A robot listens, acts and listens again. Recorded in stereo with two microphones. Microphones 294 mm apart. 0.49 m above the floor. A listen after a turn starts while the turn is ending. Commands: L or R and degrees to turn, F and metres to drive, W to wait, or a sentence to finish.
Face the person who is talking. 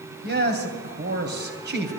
R35
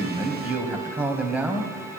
Found it: a man speaking, straight ahead, 2 to 4 m away.